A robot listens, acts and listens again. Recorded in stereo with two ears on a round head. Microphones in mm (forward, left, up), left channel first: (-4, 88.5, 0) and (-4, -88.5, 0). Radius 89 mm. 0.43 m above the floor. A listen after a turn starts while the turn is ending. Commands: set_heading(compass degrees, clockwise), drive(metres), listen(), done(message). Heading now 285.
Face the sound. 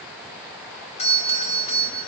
set_heading(250)
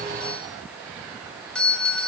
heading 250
done("Facing the doorbell.")